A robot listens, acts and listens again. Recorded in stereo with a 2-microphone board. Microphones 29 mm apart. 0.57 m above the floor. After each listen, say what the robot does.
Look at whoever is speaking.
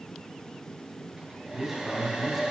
Turn 30° right.
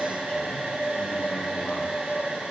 Keep listening.
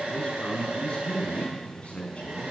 Turn 45° left.
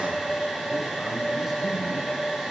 Keep listening.
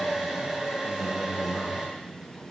Keep listening.
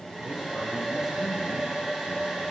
Facing where the man speaking came from. I can't hear it now.